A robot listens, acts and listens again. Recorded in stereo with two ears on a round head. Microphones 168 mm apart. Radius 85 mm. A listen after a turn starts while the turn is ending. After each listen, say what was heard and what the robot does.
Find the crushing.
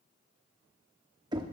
Keep listening.
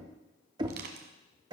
The crushing: about 60° right or 120° right. Turn 60° right.
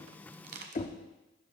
So it is at 55° right. Turn 55° right.
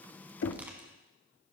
The crushing is now 10° right. Turn 10° right.
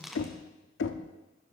Found it: crushing, straight ahead, 1 to 2 m away.